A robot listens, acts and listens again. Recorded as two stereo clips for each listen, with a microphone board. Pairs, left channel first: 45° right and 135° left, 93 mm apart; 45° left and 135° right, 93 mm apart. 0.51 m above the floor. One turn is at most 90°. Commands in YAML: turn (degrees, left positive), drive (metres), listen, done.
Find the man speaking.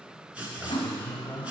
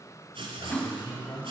turn: 20
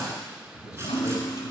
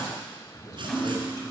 done: "Facing the man speaking."